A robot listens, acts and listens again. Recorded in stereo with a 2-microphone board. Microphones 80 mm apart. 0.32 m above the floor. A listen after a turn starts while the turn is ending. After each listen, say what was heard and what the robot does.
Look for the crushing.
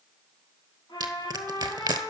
The crushing: about 65° right or 115° right. Turn 65° right.
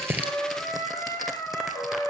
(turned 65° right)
Keep listening.
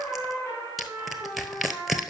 Found it: crushing, straight ahead, 1 to 2 m away.